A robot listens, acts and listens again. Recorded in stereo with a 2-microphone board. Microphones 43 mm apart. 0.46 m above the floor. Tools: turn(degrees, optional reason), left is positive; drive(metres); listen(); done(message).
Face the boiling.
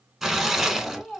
turn(degrees=30)
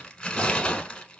listen()
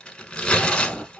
turn(degrees=-30, reason="So it is at 30° right.")
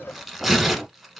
done("Found it: boiling, straight ahead.")